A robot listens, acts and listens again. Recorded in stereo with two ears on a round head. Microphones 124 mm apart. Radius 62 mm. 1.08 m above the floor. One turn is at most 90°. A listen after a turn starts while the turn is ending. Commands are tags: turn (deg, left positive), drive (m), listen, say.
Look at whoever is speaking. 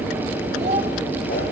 <turn deg="-50"/>
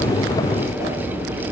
<listen/>
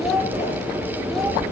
<say>Found it: a child speaking, straight ahead.</say>